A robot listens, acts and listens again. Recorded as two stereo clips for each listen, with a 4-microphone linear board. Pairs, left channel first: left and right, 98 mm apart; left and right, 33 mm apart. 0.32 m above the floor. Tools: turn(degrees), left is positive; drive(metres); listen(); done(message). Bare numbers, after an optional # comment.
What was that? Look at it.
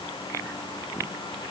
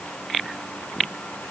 listen()
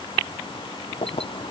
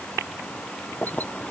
# The keys jangling: about 70° left or 110° left.
turn(70)
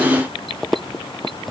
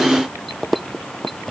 done("Found it: keys jangling, straight ahead.")